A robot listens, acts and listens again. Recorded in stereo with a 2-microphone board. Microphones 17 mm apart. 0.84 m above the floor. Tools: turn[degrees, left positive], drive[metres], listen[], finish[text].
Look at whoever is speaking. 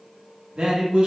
Thought: The man speaking: about 70° right or 110° right.
Action: turn[-70]
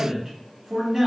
Thought: So it is at 15° right.
Action: turn[-15]
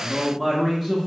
Action: finish[Facing the man speaking, under 1 m away.]